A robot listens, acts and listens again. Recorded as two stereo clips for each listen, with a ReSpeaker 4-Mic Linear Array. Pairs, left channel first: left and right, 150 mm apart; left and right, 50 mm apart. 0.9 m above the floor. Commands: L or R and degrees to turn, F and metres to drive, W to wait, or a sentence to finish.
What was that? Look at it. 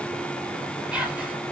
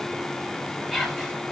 R30
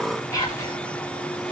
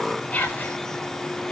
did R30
L25
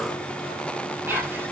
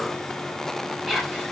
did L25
R10
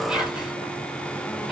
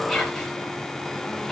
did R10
Facing the whispering, 2 to 4 m away.